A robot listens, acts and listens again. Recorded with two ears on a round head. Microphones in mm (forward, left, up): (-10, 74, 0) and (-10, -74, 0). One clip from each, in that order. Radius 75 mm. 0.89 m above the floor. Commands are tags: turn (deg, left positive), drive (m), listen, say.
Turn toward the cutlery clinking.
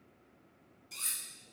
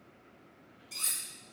<turn deg="30"/>
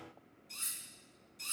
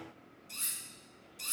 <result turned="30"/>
<turn deg="-20"/>
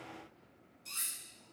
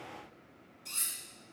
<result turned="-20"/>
<say>Facing the cutlery clinking, 1 to 2 m away.</say>